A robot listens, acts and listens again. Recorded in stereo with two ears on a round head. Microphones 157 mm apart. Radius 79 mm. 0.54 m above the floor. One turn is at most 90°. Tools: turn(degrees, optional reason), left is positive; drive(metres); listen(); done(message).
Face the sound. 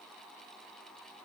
listen()
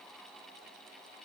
listen()
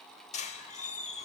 turn(degrees=40, reason="The squeak: about 40° left or 140° left.")
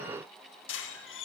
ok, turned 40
turn(degrees=90, reason="So it is at 100° left.")
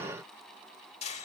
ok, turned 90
turn(degrees=35, reason="The squeak is now 35° left.")
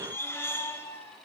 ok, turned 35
turn(degrees=15, reason="The squeak is now 15° left.")
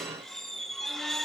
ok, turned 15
done("Found it: a squeak, straight ahead.")